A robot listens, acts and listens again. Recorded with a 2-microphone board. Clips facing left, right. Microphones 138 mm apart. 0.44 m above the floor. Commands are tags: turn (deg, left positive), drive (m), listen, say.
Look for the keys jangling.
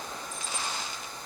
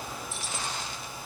<turn deg="-90"/>
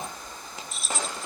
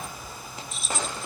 <say>Found it: keys jangling, straight ahead.</say>